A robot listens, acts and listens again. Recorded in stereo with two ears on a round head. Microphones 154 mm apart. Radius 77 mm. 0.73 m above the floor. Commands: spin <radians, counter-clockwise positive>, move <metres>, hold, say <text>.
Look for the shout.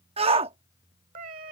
spin -0.61
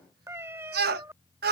spin -1.83
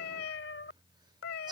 spin -0.52
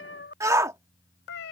spin -0.35
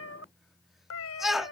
say Facing the shout.